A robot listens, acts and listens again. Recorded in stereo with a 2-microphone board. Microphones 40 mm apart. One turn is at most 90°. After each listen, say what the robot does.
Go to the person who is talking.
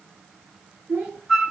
Turn 50° right.
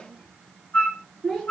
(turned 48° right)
Drive 1.0 m forward.
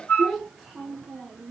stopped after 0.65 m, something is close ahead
Something is in my way. I am facing the child speaking but have not reached it.